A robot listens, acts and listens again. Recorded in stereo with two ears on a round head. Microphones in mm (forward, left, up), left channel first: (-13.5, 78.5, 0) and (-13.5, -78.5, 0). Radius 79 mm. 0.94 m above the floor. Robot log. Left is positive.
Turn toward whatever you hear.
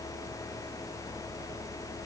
cmd idle
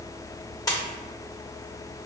note: The splash: about 20° left or 160° left.
cmd yaw +20
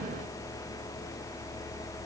cmd idle
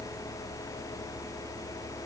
end: I heard a splash, but can't make it out now. It was about straight ahead or 140° left.